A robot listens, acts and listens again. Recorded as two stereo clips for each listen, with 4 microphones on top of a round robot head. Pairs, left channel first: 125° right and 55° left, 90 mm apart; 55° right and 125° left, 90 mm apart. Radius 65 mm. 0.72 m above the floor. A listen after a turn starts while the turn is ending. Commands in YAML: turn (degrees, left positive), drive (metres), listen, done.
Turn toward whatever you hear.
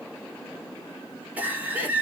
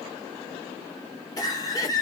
turn: -15
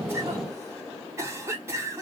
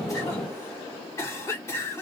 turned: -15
done: "Found it: a cough, straight ahead."